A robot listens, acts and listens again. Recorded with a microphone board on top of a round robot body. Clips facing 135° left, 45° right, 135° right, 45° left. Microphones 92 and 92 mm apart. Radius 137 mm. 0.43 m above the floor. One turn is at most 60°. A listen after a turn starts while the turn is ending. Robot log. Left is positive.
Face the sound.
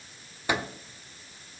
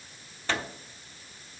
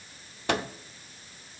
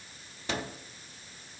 note: The microwave: 150° right.
cmd yaw -60
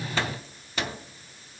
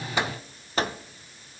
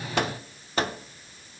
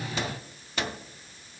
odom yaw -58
note: The microwave is now 90° right.
cmd yaw -60
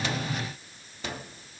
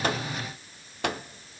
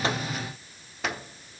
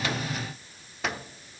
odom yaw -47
note: The microwave is now 45° right.
cmd yaw -45
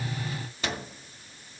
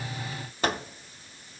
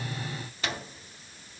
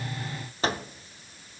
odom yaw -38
end: Found it: a microwave, straight ahead.